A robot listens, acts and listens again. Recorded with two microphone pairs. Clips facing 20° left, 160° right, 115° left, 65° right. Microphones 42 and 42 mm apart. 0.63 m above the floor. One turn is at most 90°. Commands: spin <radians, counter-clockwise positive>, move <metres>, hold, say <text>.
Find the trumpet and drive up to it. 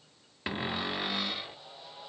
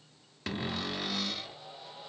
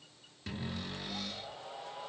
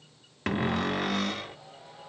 hold
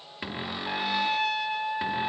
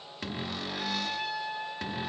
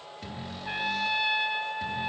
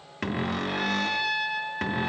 spin 0.79
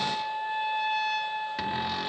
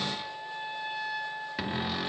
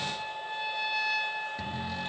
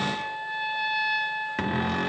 spin 0.35
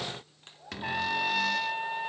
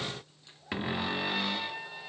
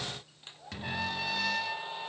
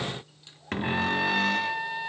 move 1.0
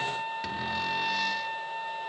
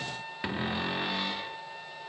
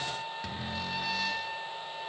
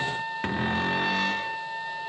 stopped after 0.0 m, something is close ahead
say Something is in my way. I am facing the trumpet but have not reached it.